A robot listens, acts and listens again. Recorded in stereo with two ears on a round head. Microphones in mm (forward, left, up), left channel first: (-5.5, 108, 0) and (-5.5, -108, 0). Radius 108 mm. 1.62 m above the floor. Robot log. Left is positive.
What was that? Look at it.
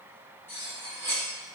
cmd yaw +30
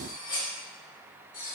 note: So it is at 140° left.
cmd yaw +140
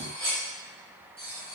note: The cutlery clinking is now 15° right.
cmd yaw -15
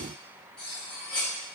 end: Facing the cutlery clinking, 1 to 2 m away.